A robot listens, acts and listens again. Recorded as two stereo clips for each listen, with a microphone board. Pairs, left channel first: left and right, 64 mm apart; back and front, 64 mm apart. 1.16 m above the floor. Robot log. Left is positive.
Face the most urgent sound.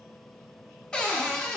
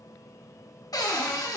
cmd idle
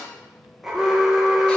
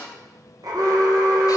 end: Found it: an alarm, straight ahead, 1 to 2 m away.